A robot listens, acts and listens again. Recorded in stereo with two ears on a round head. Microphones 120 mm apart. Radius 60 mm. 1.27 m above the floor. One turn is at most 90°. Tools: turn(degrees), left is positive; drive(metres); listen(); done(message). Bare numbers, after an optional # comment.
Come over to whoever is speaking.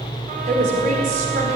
# The woman speaking: about 65° right or 115° right.
turn(-65)
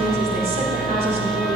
# So it is at 50° right.
turn(-50)
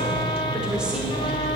listen()
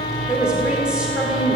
drive(1.0)
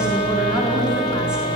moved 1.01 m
listen()
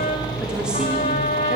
listen()
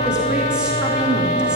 done("Facing where the woman speaking came from. I can't hear it now. I did not reach it.")